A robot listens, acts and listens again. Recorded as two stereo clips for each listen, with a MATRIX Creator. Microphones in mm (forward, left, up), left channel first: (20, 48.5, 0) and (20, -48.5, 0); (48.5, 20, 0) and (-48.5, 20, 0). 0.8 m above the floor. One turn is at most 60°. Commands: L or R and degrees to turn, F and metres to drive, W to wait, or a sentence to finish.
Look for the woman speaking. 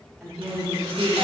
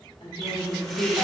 Facing the woman speaking, 2 to 4 m away.